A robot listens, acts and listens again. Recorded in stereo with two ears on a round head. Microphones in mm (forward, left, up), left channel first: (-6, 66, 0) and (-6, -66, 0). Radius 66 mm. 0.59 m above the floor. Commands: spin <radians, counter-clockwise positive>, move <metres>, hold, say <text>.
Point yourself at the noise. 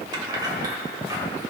spin -0.44
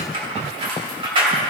spin -0.61
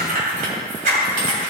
spin -2.09
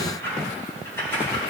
spin 0.26
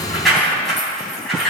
say Facing the keys jangling, 2 to 4 m away.